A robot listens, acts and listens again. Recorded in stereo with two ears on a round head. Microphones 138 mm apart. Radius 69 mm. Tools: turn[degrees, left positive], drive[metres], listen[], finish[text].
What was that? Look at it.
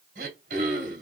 Thought: The throat clearing: about 70° right or 110° right.
Action: turn[-70]
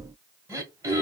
Thought: So it is at 20° right.
Action: turn[-20]
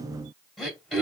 Action: finish[Facing the throat clearing, 1 to 2 m away.]